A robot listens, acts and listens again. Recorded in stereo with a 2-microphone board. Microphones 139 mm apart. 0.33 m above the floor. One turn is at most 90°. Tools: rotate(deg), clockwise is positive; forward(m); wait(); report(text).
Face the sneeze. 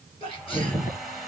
rotate(-40)
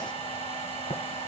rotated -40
wait()
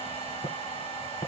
report("I heard a sneeze, but can't make it out now. It was about straight ahead or 100° left.")